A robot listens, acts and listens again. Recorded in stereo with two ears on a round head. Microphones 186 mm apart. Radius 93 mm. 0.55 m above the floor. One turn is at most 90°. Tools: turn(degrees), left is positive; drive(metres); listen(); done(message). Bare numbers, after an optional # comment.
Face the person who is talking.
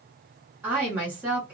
turn(-30)
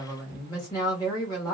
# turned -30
# So it is at 20° left.
turn(20)
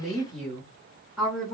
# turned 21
done("Found it: a woman speaking, straight ahead.")